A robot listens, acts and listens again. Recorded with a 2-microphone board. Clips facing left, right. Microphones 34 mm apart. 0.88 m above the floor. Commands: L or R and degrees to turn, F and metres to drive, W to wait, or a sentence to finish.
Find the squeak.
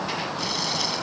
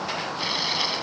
W
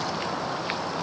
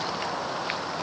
W
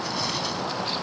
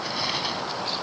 I can't make out a squeak.